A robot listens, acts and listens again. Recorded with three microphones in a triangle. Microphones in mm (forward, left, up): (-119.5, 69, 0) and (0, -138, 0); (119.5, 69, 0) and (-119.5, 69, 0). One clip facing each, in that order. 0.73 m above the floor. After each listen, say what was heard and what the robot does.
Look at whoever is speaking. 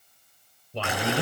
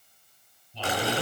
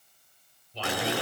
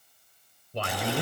The man speaking: 145° left. Turn 145° left.
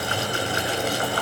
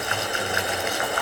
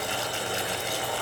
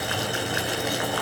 Keep listening.
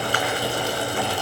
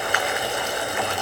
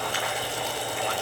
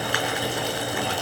Keep listening.
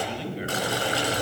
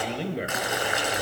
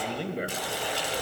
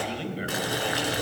The man speaking is now 35° right. Turn 35° right.
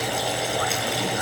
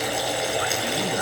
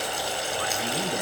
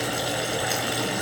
Keep listening.
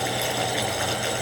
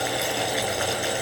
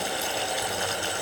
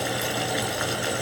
Keep listening.
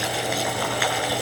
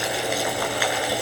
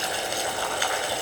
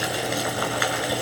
Facing where the man speaking came from. I can't hear it now.